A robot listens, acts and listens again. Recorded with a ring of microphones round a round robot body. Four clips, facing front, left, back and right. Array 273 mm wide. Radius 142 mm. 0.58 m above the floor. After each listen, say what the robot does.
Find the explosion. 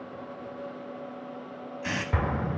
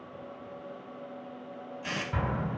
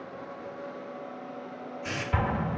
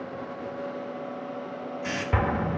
Turn 80° right.
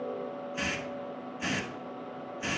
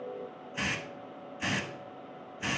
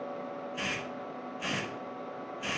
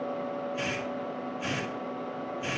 Facing where the explosion came from. I can't hear it now.